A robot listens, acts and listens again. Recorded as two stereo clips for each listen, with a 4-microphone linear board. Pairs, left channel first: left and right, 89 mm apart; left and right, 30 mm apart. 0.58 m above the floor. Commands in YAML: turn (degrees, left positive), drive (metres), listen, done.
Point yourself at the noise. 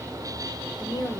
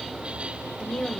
turn: 50
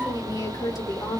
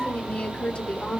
turn: 50
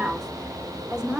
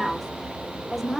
turn: -10
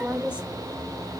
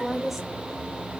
turn: -10
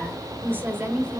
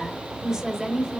turn: -25
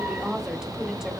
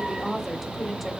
done: "Found it: a woman speaking, straight ahead, 1 to 2 m away."